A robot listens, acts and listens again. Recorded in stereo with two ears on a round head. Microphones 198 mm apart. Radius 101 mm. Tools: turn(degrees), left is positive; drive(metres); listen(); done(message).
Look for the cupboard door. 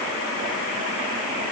listen()
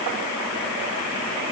listen()
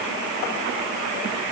done("I can't make out a cupboard door.")